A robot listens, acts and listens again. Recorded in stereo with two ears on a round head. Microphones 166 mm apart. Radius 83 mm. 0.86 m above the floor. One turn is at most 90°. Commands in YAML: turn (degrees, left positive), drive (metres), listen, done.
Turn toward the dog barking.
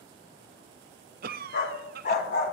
turn: 50
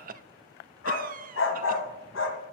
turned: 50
turn: 80
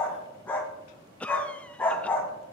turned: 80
turn: 10
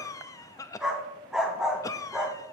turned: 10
done: "Facing the dog barking."